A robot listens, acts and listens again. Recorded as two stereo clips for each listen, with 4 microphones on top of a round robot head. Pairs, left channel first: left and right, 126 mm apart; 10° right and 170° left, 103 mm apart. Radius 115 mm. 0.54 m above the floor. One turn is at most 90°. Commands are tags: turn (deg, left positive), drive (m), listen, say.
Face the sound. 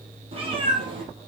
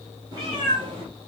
<turn deg="-90"/>
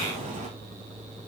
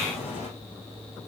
<turn deg="-45"/>
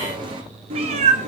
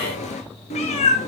<turn deg="-50"/>
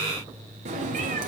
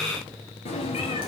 <turn deg="-60"/>
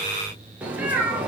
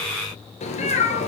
<turn deg="-10"/>
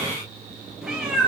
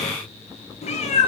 <say>Found it: a cat meowing, straight ahead.</say>